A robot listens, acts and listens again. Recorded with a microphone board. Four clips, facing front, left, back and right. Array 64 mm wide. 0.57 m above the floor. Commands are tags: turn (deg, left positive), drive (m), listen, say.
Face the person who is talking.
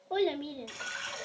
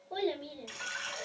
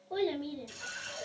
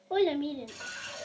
<turn deg="-60"/>
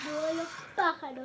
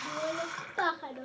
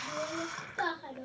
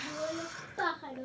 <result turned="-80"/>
<turn deg="20"/>
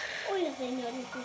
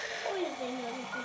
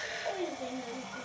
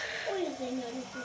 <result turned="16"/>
<say>Found it: a child speaking, straight ahead, under 1 m away.</say>